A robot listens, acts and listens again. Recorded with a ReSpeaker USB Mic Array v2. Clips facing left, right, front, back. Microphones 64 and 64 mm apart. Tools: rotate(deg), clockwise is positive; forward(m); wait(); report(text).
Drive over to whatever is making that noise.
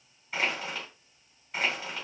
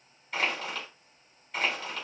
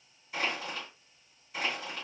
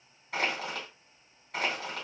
rotate(-175)
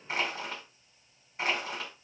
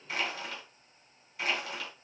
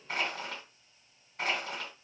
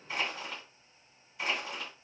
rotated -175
rotate(-35)
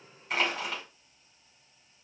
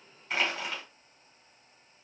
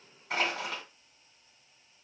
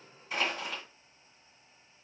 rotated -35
forward(1.0)
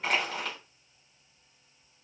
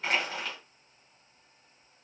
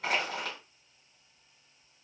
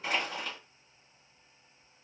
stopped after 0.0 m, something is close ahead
report("Blocked. The crushing is further on, straight ahead.")